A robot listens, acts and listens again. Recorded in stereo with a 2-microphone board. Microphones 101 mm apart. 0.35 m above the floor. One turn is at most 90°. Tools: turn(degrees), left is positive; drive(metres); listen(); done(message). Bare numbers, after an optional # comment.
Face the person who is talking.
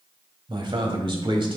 # The man speaking: about 55° right or 125° right.
turn(-55)
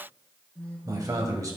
# So it is at 45° right.
turn(-45)
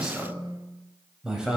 # The man speaking is now 10° right.
turn(-10)
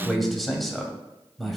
done("Facing the man speaking.")